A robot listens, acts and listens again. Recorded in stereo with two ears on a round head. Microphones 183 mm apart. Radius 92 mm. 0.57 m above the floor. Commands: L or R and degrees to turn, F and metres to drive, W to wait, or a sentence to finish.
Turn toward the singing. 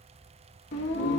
L55
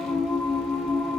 Found it: singing, straight ahead, 1 to 2 m away.